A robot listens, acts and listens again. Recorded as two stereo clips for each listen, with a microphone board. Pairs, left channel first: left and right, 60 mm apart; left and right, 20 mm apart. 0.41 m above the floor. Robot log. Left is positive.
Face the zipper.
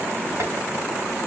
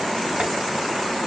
cmd idle
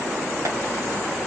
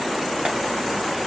cmd idle
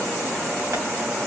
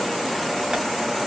end: I can't make out a zipper to turn to.